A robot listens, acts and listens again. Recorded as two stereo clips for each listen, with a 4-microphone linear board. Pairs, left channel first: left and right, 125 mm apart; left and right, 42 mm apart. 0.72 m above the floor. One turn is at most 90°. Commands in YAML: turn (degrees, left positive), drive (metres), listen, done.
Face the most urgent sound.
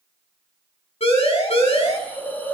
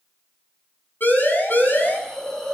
turn: 55
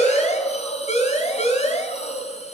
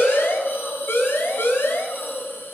turn: 70
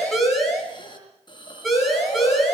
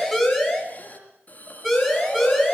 done: "Found it: a siren, straight ahead."